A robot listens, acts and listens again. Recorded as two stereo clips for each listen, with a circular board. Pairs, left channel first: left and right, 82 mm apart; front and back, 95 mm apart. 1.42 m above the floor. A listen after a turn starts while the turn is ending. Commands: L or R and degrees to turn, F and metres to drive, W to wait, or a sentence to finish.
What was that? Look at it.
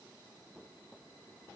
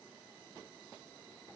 W
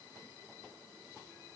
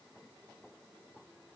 W
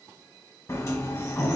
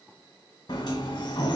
L35
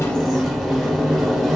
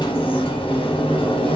Facing the sliding door.